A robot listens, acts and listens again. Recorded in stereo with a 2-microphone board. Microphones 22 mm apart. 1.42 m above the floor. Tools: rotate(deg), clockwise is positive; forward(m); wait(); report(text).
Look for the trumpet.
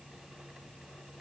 wait()
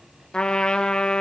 rotate(-45)
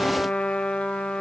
rotate(-90)
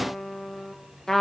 rotate(-15)
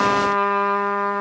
report("Found it: a trumpet, straight ahead, 2 to 4 m away.")